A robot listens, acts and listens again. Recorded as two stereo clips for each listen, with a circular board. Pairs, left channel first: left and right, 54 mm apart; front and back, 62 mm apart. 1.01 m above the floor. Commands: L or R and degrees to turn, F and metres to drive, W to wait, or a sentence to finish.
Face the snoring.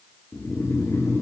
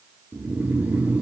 L120
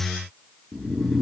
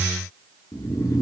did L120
Facing the snoring.